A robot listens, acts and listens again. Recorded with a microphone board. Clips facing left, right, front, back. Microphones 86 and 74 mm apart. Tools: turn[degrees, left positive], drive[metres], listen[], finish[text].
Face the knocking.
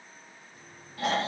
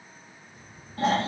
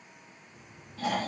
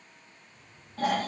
Action: finish[Facing the knocking.]